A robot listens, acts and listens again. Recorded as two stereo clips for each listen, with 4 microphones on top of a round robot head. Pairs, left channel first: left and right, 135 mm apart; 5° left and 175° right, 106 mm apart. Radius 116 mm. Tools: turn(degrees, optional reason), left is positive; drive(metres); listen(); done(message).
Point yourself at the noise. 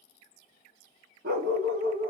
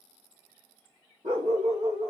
turn(degrees=-120, reason="The dog barking: 120° right.")
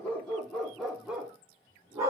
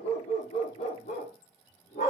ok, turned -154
turn(degrees=-25, reason="The dog barking is now 25° right.")
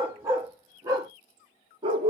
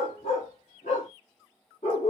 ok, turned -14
turn(degrees=-45, reason="The dog barking is now 45° right.")
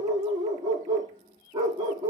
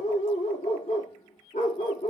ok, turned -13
turn(degrees=-30, reason="The dog barking is now 30° right.")
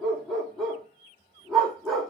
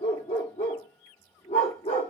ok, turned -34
done("Found it: a dog barking, straight ahead, 1 to 2 m away.")